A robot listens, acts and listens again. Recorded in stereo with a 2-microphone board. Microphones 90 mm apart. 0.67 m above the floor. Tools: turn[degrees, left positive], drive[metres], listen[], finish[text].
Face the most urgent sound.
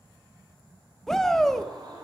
Action: turn[30]
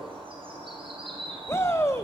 Thought: So it is at 145° left.
Action: turn[145]
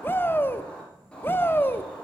Thought: The shout is now 30° left.
Action: turn[30]
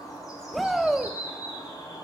Action: finish[Found it: a shout, straight ahead, under 1 m away.]